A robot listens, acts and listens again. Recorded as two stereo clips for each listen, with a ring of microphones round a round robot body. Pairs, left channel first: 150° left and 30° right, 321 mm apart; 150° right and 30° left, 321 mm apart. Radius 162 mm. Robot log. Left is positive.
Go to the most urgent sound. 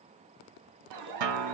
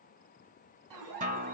cmd fwd 1.0
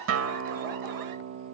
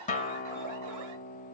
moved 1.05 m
cmd fwd 1.0
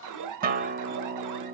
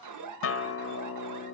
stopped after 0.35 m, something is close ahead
end: I am next to the alarm.